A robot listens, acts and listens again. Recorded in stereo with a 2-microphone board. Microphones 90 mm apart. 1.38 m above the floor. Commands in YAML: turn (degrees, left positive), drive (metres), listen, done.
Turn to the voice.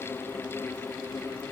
listen: true
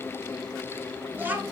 turn: -20
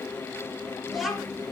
done: "Facing the child speaking, 1 to 2 m away."